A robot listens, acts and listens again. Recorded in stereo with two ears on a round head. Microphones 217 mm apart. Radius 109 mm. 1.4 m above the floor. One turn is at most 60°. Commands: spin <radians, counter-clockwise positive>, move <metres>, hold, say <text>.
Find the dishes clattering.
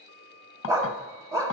spin 1.05
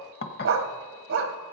spin 0.79
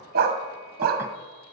hold
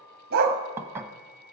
spin -0.17
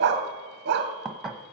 say Found it: dishes clattering, straight ahead.